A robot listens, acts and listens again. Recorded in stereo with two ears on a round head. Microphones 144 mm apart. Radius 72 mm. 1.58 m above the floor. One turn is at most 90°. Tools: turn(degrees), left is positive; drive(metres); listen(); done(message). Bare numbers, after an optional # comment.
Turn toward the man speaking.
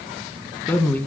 turn(30)
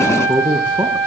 # So it is at 15° right.
turn(-15)
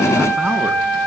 listen()
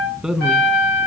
done("Found it: a man speaking, straight ahead, 2 to 4 m away.")